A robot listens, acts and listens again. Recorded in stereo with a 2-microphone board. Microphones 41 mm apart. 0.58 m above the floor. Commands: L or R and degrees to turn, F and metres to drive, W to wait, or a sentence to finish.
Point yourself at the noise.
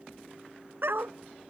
R70
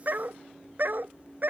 R55
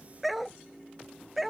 Facing the dog barking.